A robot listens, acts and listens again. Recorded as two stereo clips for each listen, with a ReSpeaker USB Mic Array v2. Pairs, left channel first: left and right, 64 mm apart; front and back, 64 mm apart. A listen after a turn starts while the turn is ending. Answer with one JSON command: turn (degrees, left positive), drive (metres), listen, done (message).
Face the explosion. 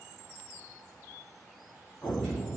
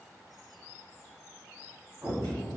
{"turn": 135}
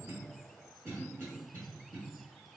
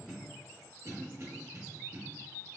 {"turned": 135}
{"done": "I heard an explosion from this way, but can't make it out now."}